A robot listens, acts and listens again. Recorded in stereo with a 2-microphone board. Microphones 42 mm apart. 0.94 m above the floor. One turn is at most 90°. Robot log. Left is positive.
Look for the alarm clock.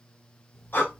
cmd yaw +30
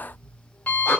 note: So it is at 140° left.
cmd yaw +90
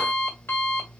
note: The alarm clock is now 75° left.
cmd yaw +75
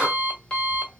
note: The alarm clock is now 25° left.
cmd yaw +25
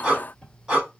note: The alarm clock is now 15° left.
cmd yaw +15
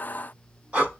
cmd idle
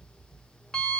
note: The alarm clock is now 10° left.
cmd yaw +10
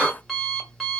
end: Found it: an alarm clock, straight ahead, 1 to 2 m away.